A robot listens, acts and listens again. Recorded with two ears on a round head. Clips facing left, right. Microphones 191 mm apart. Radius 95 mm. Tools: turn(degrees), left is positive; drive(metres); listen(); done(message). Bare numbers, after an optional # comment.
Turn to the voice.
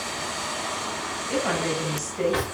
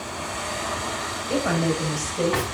# The woman speaking: about 70° right or 110° right.
turn(-70)
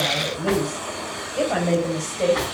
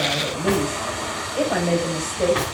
# So it is at 10° right.
turn(-10)
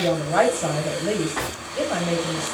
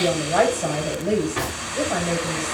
done("Facing the woman speaking.")